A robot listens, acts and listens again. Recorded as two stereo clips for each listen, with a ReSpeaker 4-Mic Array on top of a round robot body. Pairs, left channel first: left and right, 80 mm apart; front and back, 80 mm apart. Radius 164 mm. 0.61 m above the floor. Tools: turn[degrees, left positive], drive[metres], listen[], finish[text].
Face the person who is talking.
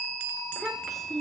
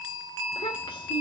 Action: finish[Facing the child speaking, 2 to 4 m away.]